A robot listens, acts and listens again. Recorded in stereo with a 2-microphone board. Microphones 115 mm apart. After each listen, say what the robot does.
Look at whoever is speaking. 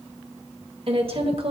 Turn 55° right.
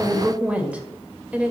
Turn 15° right.
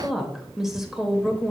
Found it: a woman speaking, straight ahead.